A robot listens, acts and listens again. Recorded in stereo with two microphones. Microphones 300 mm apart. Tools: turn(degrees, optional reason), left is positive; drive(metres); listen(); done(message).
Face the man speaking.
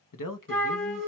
turn(degrees=90)
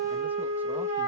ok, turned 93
listen()
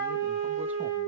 listen()
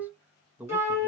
done("Facing the man speaking.")